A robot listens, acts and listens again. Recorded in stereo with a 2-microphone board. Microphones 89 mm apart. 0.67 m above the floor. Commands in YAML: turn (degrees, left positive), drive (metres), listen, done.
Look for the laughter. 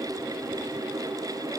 listen: true
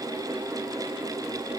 listen: true
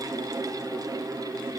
done: "I can't make out laughter."